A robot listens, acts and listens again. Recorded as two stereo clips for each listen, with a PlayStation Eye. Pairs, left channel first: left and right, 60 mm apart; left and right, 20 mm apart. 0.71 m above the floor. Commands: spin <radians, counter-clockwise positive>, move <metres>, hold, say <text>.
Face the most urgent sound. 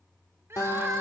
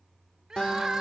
spin -0.79
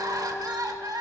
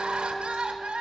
spin -1.66
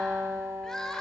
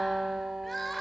spin 0.17
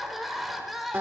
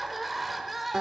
say Found it: crying, straight ahead.